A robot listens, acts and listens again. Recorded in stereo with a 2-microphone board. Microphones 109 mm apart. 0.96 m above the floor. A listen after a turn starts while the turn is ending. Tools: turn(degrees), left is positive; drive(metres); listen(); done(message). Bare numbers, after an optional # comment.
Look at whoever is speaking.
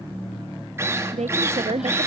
turn(-90)
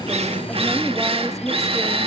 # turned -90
listen()
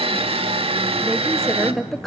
done("Facing the woman speaking, under 1 m away.")